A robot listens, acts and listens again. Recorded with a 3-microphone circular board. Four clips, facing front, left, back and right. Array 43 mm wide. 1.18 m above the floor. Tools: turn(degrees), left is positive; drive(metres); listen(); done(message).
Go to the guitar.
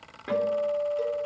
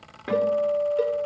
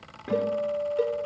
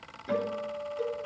turn(degrees=70)
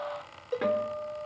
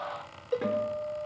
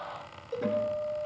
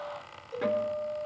drive(metres=1.0)
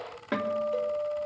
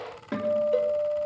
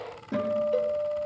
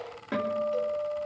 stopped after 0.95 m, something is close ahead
done("Something is in my way. I am facing the guitar but have not reached it.")